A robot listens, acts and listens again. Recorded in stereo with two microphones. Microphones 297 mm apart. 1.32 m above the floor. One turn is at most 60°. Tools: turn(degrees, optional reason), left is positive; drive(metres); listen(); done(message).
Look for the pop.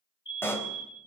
turn(degrees=30)
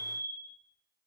listen()
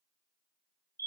done("I heard a pop, but can't make it out now. It was about 25° right or 145° left.")